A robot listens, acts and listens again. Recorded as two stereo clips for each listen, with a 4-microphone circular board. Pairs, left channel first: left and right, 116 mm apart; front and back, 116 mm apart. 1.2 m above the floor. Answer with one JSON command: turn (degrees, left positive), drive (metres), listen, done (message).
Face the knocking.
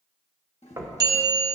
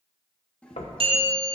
{"turn": -25}
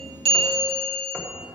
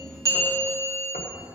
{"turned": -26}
{"listen": true}
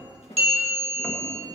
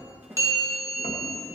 {"listen": true}
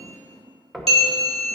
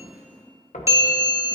{"done": "Facing the knocking, 1 to 2 m away."}